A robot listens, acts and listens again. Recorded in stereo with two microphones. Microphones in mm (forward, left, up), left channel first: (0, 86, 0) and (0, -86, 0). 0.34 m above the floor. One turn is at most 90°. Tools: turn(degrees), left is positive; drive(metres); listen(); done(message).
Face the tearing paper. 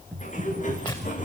turn(degrees=25)
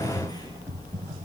listen()
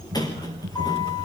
listen()
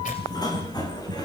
turn(degrees=90)
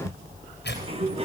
turn(degrees=75)
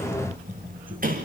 listen()
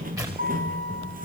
turn(degrees=-20)
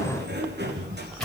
done("Found it: tearing paper, straight ahead.")